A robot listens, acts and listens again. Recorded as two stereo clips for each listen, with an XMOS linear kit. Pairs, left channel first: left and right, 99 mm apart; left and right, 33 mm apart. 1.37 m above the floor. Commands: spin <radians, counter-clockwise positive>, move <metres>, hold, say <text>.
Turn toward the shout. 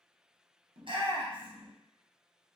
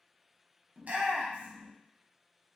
spin -0.96
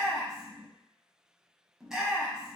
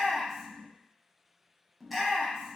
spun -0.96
say Found it: a shout, straight ahead.